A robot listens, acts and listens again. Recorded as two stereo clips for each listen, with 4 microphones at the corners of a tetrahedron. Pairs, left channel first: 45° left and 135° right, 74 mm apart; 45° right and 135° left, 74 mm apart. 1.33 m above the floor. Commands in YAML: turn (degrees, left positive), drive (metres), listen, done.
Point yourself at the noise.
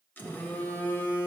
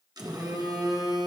turn: 110
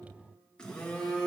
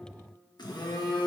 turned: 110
turn: -35
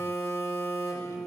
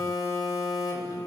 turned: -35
done: "Found it: a phone buzzing, straight ahead."